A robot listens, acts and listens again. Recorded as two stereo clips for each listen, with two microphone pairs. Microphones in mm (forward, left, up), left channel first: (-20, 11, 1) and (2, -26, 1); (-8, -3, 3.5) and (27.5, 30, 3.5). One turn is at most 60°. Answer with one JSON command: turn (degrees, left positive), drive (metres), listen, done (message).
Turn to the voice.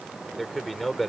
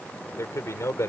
{"turn": -60}
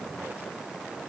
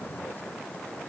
{"turn": -60}
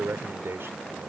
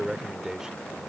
{"turn": -35}
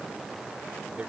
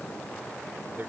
{"listen": true}
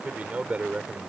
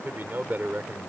{"done": "Found it: a man speaking, straight ahead."}